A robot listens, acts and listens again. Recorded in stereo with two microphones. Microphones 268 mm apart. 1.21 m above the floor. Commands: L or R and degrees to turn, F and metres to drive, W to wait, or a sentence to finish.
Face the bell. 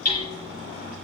W
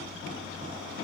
W
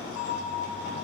L25
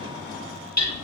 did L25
W
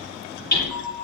L130
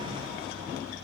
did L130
W
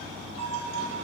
R25
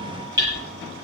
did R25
W
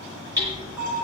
Found it: a bell, straight ahead, over 4 m away.